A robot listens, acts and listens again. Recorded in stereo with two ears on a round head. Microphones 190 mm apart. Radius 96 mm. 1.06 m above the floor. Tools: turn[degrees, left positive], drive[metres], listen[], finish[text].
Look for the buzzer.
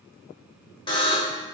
Thought: The buzzer: about 25° left or 155° left.
Action: turn[25]
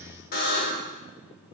Thought: So it is at 135° left.
Action: turn[135]
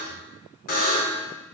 Thought: The buzzer is now 40° left.
Action: turn[40]
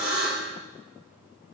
Action: finish[Found it: a buzzer, straight ahead.]